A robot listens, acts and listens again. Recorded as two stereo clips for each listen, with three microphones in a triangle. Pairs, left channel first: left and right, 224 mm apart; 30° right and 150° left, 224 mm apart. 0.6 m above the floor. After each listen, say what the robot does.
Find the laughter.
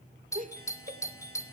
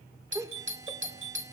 Turn 135° right.
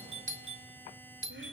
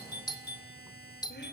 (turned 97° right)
Turn 40° right.
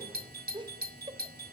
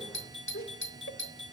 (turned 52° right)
Turn 25° right.
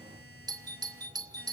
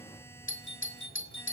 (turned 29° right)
Keep listening.
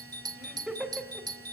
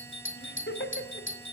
Facing the laughter.